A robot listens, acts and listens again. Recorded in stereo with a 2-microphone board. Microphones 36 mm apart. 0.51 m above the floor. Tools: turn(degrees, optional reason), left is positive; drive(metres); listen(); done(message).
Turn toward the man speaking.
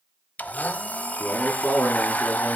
turn(degrees=90)
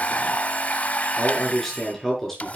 turn(degrees=10, reason="So it is at 10° left.")
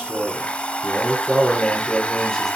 turn(degrees=10, reason="The man speaking is now 10° left.")
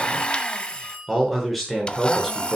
done("Facing the man speaking.")